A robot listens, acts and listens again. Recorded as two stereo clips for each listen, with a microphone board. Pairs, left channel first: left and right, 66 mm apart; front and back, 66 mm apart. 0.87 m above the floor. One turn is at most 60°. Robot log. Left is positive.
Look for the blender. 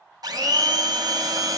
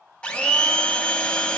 note: The blender: 75° right.
cmd yaw -60
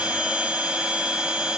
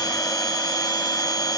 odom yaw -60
note: The blender is now 15° right.
cmd yaw -15
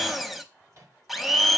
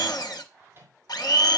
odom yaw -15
end: Facing the blender.